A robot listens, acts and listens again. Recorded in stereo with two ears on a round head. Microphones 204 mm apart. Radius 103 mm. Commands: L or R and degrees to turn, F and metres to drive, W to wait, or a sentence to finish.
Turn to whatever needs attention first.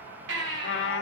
R70
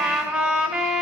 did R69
W
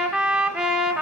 W
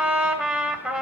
I heard a baby crying, but can't make it out now. It was about straight ahead or 45° right.